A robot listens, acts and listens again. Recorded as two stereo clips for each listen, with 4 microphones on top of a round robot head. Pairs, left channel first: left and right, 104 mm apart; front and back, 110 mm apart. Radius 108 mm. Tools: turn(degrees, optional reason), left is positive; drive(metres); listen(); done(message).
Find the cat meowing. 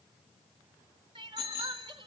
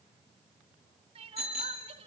listen()
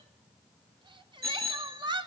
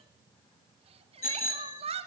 listen()
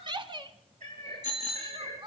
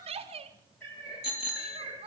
turn(degrees=-75, reason="The cat meowing: 75° right.")
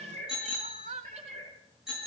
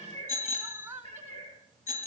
turn(degrees=-45, reason="The cat meowing is now 45° right.")
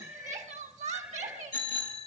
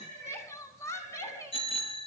turn(degrees=-10, reason="The cat meowing is now 10° right.")
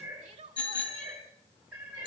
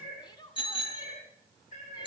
done("Facing the cat meowing.")